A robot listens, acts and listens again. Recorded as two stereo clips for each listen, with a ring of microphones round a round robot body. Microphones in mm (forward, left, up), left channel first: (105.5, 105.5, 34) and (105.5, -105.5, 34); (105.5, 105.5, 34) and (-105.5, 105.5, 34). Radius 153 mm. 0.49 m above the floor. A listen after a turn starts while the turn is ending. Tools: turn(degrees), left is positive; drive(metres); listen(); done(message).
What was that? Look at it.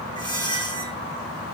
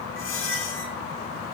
turn(degrees=20)
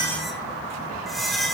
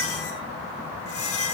done("Facing the squeak, 2 to 4 m away.")